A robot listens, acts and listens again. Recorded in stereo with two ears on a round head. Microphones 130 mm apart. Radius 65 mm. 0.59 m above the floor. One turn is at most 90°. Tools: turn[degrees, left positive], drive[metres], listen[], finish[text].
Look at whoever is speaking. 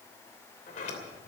Action: listen[]
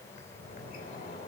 Action: listen[]
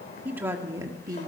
Thought: The woman speaking: about 30° right or 150° right.
Action: turn[-30]
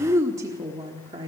Thought: The woman speaking: about 35° right or 145° right.
Action: turn[-35]
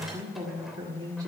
Thought: The woman speaking: about 25° right or 155° right.
Action: turn[-25]
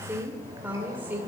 Thought: So it is at 10° right.
Action: turn[-10]
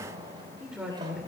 Action: finish[Facing the woman speaking.]